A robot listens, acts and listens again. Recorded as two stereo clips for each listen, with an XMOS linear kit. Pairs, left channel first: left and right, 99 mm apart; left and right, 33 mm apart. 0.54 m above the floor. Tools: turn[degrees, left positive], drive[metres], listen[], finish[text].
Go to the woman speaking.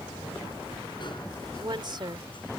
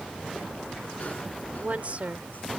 Thought: The woman speaking: about 50° right or 130° right.
Action: turn[-50]
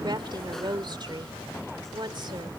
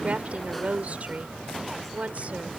Thought: So it is at 65° right.
Action: turn[-65]
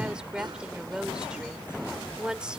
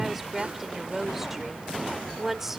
Thought: The woman speaking is now 10° right.
Action: turn[-10]
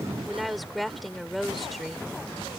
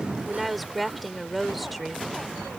Action: drive[1.0]
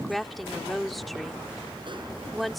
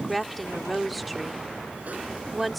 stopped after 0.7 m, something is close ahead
Action: finish[Arrived at the woman speaking, straight ahead.]